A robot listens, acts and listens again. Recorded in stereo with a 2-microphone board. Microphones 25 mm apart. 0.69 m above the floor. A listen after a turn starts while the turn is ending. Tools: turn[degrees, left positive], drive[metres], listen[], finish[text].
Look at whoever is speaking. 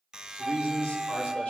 Thought: The man speaking: about 70° left or 110° left.
Action: turn[70]
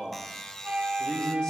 Thought: So it is at 30° left.
Action: turn[30]
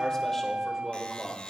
Action: finish[Found it: a man speaking, straight ahead.]